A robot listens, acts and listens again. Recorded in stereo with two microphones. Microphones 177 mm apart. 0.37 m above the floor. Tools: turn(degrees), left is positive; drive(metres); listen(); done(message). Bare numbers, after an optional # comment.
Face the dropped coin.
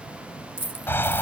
# The dropped coin: about 75° right or 105° right.
turn(-75)
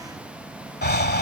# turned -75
listen()
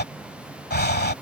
done("I heard a dropped coin, but can't make it out now. It was about straight ahead or 30° right.")